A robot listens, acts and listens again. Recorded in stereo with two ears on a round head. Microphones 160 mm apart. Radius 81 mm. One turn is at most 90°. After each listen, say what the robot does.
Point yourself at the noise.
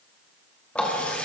Turn 30° left.
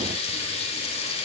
Turn 90° left.
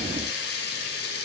Turn 65° left.
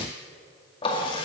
Turn 30° left.
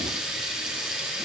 Found it: a running tap, straight ahead.